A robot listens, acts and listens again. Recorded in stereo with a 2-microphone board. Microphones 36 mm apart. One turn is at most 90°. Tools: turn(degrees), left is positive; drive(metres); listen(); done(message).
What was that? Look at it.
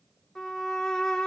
turn(degrees=20)
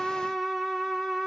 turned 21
done("Facing the violin, 2 to 4 m away.")